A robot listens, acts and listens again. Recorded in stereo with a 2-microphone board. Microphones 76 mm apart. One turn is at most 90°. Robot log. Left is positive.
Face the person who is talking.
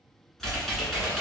cmd idle
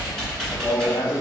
note: The man speaking: about 20° left or 160° left.
cmd yaw +20
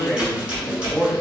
end: Found it: a man speaking, straight ahead, 2 to 4 m away.